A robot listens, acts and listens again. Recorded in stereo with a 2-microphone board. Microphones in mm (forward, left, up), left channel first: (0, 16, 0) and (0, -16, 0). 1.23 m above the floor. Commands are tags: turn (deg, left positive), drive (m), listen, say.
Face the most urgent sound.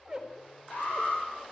<turn deg="60"/>
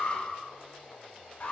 <turn deg="60"/>
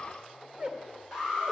<turn deg="-15"/>
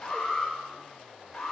<say>Found it: an alarm, straight ahead, over 4 m away.</say>